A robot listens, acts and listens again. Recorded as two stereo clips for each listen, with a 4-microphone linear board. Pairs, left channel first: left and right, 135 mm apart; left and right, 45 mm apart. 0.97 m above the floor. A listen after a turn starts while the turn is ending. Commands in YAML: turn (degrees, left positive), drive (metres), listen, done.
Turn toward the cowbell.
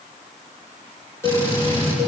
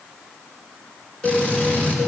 turn: 20
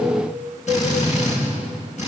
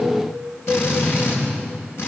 done: "Facing the cowbell."